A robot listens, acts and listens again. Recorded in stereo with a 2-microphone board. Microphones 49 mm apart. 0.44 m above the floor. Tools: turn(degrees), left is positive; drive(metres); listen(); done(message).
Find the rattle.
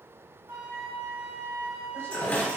turn(degrees=35)
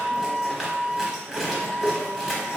done("Facing the rattle, 1 to 2 m away.")